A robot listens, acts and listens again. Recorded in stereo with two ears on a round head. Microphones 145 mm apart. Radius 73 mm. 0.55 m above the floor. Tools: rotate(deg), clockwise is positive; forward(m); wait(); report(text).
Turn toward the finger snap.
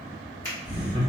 rotate(-20)
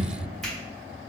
wait()
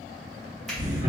wait()
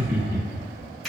report("Found it: a finger snap, straight ahead, 1 to 2 m away.")